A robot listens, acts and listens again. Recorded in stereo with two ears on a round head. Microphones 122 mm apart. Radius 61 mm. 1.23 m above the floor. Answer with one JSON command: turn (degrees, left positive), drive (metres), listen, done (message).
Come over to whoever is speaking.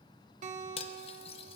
{"listen": true}
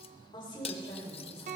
{"turn": 35}
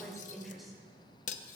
{"drive": 1.0}
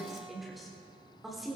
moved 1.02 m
{"drive": 1.0}
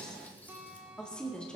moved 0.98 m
{"drive": 1.0}
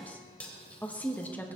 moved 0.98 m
{"turn": 10}
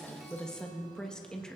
{"drive": 1.0}
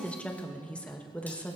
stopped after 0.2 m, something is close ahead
{"turn": 10}
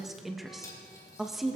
{"done": "I am next to the woman speaking."}